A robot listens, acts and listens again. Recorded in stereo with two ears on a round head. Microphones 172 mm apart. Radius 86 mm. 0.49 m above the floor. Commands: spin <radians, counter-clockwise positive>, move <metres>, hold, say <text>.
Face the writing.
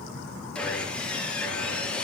hold
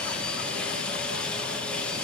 hold
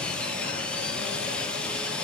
say I can't make out writing, only sawing.